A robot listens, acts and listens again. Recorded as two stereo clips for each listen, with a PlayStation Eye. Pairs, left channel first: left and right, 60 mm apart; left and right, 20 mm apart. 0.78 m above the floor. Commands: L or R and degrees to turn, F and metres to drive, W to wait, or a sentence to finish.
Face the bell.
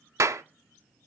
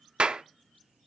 W
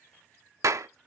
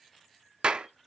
W
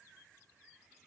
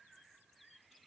I can't make out a bell to turn to.